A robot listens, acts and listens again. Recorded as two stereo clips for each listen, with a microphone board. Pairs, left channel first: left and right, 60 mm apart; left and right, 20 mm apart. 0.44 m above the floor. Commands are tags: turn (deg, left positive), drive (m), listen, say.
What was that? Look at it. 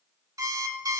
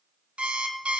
<turn deg="-70"/>
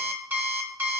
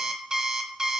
<turn deg="-35"/>
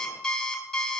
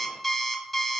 <turn deg="10"/>
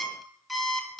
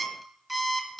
<say>Facing the alarm clock, 1 to 2 m away.</say>